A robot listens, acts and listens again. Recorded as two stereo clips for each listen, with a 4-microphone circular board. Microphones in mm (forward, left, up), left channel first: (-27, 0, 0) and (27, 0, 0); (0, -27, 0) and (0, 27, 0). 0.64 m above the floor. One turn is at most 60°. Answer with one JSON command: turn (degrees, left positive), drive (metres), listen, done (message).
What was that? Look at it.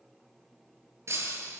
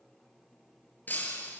{"turn": -35}
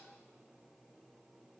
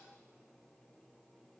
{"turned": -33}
{"done": "I heard breaking glass from this way, but can't make it out now."}